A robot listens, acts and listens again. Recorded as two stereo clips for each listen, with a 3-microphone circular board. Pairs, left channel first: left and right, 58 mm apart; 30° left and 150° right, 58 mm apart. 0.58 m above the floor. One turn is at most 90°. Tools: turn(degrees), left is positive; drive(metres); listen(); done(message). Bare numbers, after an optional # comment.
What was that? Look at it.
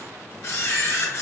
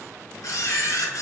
# The camera shutter: 50° left.
turn(50)
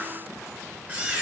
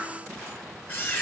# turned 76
# The camera shutter is now 25° right.
turn(-25)
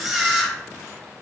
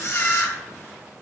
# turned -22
done("Facing the camera shutter, 1 to 2 m away.")